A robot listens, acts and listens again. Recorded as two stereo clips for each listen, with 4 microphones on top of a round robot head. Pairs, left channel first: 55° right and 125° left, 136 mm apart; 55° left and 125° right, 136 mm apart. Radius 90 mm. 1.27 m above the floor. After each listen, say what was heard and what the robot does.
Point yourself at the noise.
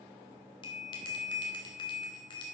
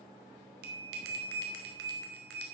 The bell: 115° right. Turn 115° right.
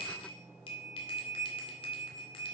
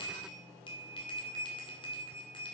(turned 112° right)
Found it: a bell, straight ahead, 1 to 2 m away.